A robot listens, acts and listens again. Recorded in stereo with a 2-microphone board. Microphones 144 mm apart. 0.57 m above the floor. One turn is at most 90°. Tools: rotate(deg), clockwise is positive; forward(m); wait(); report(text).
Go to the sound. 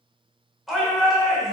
rotate(-30)
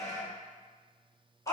rotate(-90)
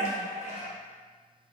rotate(-90)
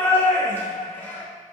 rotate(-15)
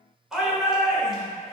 forward(1.0)
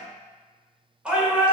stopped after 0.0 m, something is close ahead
rotate(10)
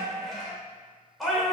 report("Something is in my way. I am facing the shout but have not reached it.")